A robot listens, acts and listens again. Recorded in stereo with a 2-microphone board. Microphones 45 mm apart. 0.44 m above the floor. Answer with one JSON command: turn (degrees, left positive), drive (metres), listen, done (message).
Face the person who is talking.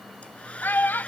{"turn": 50}
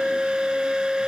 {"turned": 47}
{"listen": true}
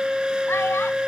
{"listen": true}
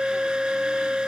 {"done": "I heard a child speaking, but can't make it out now. It was about straight ahead or 85° left."}